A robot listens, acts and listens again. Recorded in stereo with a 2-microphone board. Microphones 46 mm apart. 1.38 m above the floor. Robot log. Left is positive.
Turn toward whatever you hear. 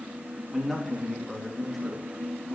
cmd yaw +30
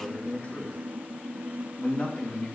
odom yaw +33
note: So it is at 145° left.
cmd yaw +145
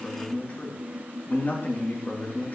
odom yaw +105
note: The man speaking is now 40° left.
cmd yaw +40
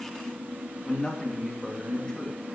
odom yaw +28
note: The man speaking is now 15° left.
cmd yaw +15
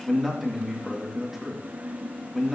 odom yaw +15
end: Facing the man speaking, 2 to 4 m away.